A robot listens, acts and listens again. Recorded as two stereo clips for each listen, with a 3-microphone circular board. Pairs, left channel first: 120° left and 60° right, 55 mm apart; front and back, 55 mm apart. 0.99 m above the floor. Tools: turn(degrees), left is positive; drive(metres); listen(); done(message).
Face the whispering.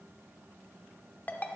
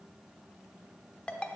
listen()
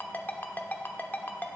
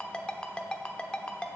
listen()
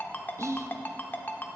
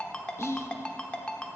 turn(degrees=-35)
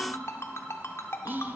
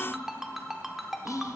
turn(degrees=-10)
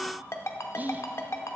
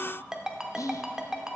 done("Found it: whispering, straight ahead, under 1 m away.")